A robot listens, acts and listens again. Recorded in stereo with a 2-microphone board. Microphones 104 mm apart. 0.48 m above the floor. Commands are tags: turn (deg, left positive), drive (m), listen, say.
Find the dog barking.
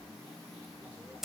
<listen/>
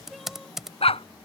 <turn deg="70"/>
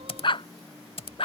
<turn deg="60"/>
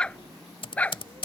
<turn deg="15"/>
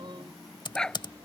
<say>Found it: a dog barking, straight ahead.</say>